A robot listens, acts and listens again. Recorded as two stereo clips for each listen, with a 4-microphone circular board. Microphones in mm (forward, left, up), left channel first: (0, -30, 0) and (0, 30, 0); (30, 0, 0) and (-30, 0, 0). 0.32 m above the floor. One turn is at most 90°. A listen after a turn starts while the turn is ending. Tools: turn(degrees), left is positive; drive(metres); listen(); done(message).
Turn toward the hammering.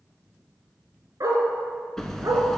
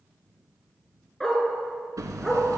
turn(degrees=-90)
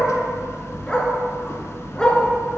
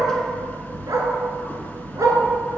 turn(degrees=-55)
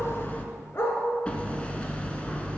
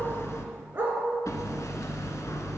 turn(degrees=-20)
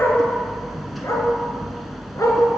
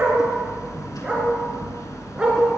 done("Facing the hammering, under 1 m away.")